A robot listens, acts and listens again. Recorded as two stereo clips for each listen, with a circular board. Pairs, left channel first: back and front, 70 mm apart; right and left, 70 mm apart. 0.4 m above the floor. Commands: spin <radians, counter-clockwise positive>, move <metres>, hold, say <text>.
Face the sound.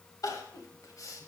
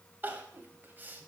spin 2.62
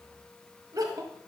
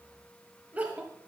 spin 0.44
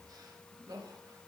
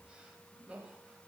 spin 0.26
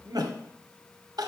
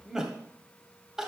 spin 0.17
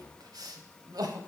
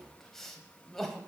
say Facing the crying, 1 to 2 m away.